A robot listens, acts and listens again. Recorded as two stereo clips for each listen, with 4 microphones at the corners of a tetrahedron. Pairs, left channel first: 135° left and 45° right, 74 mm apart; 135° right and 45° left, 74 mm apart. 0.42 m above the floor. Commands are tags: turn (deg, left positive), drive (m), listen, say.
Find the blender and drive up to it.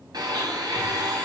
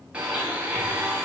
<turn deg="-30"/>
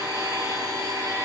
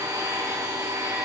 <drive m="1.0"/>
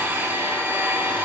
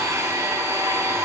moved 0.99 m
<turn deg="10"/>
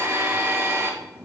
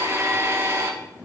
<drive m="1.0"/>
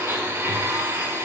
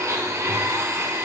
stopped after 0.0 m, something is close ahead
<say>I am next to the blender.</say>